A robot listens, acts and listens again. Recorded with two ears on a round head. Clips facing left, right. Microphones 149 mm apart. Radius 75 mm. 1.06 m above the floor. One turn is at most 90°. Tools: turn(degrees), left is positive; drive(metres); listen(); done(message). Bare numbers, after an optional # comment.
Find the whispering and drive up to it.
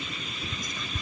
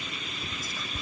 turn(-30)
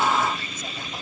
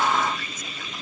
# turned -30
listen()
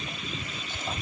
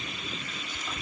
# So it is at 25° left.
turn(25)
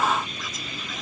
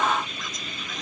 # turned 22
listen()
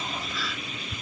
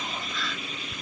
drive(1.0)
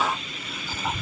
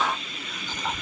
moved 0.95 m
drive(1.0)
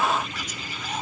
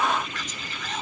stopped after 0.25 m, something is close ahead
# The whispering is now 10° left.
turn(10)
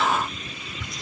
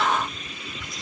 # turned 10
done("Something is in my way. I am facing the whispering but have not reached it.")